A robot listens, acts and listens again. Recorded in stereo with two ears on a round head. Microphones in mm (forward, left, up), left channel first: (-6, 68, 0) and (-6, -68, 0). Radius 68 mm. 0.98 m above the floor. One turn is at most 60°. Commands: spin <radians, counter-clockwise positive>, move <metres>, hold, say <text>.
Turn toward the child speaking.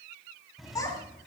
spin 0.44
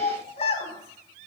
spin 1.05
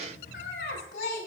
spin 1.05
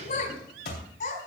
spin 1.05
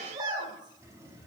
spin -0.52
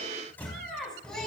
say Facing the child speaking.